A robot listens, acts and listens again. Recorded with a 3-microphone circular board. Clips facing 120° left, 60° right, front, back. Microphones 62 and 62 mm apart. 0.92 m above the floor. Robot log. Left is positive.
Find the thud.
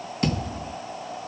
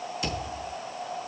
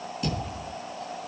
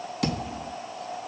note: The thud: 165° left.
cmd yaw +165
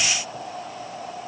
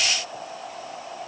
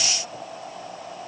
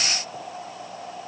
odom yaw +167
end: I heard a thud from this way, but can't make it out now.